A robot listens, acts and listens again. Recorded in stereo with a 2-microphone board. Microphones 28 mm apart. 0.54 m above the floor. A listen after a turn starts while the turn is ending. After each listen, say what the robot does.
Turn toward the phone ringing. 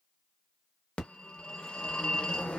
Turn 45° left.
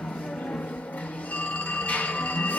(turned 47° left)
Turn 85° left.
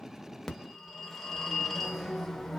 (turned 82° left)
Facing the phone ringing, under 1 m away.